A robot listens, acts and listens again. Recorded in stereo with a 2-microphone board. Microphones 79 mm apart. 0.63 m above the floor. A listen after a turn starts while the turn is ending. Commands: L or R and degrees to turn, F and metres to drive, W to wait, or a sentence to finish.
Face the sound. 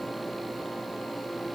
W
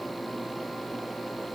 W
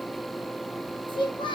L90
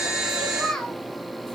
Found it: a child speaking, straight ahead, 2 to 4 m away.